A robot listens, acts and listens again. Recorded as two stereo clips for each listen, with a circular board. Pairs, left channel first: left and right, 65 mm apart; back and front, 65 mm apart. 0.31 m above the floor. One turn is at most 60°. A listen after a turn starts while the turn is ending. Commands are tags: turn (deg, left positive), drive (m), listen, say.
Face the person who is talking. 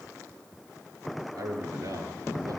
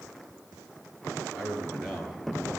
<turn deg="-60"/>
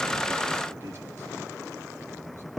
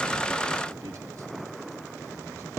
<turn deg="-25"/>
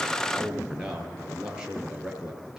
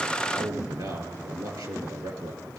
<turn deg="-15"/>
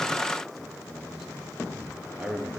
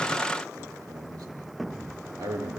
<say>Facing the man speaking, over 4 m away.</say>